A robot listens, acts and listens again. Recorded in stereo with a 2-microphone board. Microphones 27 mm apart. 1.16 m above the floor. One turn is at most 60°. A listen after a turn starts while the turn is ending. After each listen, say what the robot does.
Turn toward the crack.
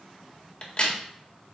Turn 30° left.
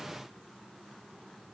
Keep listening.
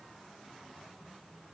I heard a crack, but can't make it out now. It was about straight ahead or 120° left.